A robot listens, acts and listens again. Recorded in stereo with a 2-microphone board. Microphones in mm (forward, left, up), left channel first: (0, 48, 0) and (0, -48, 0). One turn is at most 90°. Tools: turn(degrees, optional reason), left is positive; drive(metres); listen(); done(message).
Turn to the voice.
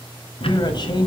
turn(degrees=50, reason="The man speaking: about 50° left or 130° left.")
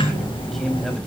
listen()
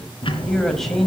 done("Found it: a man speaking, straight ahead, 2 to 4 m away.")